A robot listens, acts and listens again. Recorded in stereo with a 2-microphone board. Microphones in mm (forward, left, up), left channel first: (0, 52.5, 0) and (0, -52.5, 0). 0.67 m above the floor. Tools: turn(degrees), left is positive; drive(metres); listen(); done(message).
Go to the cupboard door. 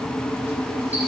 listen()
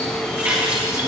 listen()
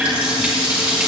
done("I can't make out a cupboard door to turn to.")